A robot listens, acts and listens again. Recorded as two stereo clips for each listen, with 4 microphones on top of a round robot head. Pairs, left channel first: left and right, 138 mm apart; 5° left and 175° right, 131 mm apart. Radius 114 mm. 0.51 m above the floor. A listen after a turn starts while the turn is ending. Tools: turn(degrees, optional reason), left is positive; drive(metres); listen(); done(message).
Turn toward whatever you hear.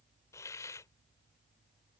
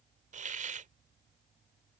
turn(degrees=160, reason="The hiss: 160° left.")
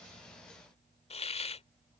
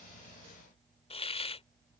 turn(degrees=50, reason="The hiss is now 50° left.")
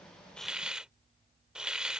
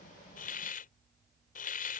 done("Facing the hiss.")